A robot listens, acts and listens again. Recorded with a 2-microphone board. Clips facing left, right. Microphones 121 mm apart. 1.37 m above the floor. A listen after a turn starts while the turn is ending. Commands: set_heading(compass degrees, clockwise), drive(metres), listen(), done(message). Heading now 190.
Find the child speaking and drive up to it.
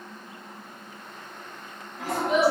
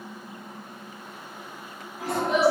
set_heading(160)
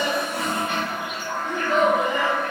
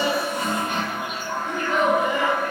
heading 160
set_heading(15)
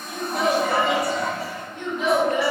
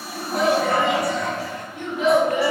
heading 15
set_heading(35)
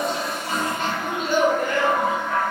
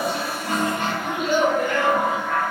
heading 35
drive(1.0)
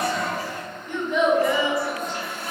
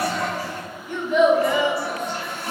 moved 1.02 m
set_heading(50)
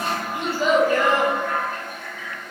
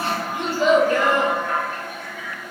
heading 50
drive(1.0)
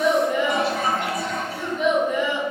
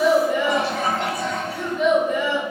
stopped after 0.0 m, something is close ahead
done("Arrived at the child speaking, straight ahead.")